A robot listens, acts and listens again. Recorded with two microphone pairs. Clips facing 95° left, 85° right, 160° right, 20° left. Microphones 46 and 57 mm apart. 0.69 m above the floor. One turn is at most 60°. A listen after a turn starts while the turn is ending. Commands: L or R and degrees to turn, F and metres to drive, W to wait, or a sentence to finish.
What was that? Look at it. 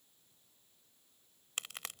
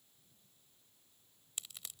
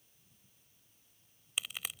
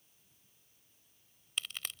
L60
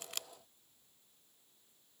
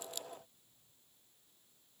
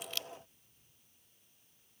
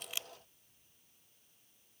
L60
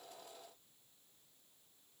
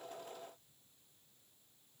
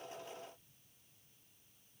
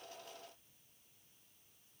Facing where the crack came from. I can't hear it now.